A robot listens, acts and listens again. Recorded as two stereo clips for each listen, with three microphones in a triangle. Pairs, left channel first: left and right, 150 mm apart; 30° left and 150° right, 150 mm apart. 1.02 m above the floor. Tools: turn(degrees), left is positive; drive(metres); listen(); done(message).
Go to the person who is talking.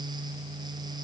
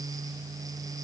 listen()
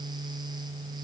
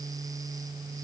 listen()
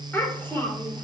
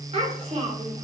turn(degrees=165)
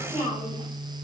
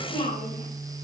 turn(degrees=45)
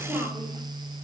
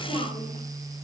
drive(metres=1.0)
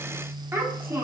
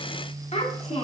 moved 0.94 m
turn(degrees=-15)
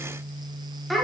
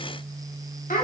drive(metres=1.0)
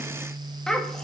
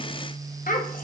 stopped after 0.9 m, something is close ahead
done("I am next to the child speaking.")